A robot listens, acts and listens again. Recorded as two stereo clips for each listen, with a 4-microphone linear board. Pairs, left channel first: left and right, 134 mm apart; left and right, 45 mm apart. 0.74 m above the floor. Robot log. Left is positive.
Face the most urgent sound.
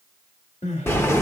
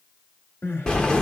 note: The crying: about 60° left or 120° left.
cmd yaw +60
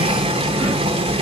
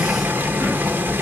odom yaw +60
cmd idle
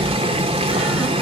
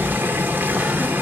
cmd idle
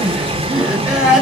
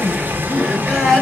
end: Found it: crying, straight ahead, 1 to 2 m away.